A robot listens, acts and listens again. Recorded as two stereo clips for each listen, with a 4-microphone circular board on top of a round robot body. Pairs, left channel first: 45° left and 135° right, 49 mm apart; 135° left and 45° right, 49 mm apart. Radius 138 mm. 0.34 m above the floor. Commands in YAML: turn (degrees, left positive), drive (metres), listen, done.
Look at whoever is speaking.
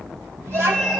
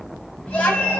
turn: -165
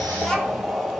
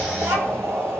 turn: -35
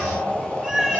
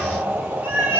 listen: true
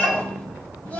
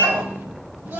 turn: -15
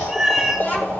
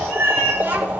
done: "Found it: a child speaking, straight ahead."